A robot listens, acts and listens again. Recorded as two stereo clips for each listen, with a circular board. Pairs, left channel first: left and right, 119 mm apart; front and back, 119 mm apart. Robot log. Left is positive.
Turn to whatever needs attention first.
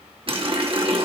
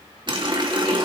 cmd idle
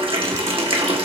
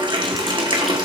cmd idle
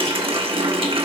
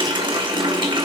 end: I can't make out anything urgent, only a running tap.